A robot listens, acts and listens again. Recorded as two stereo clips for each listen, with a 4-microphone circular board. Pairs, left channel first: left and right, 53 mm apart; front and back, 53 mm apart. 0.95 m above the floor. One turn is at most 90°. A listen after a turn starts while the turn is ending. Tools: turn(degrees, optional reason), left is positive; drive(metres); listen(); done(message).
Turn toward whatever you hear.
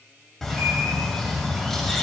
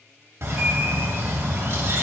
turn(degrees=90, reason="The bird: 170° left.")
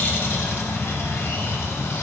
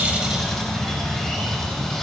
turn(degrees=80, reason="The bird is now 80° left.")
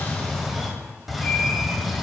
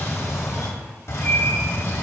done("Found it: a bird, straight ahead.")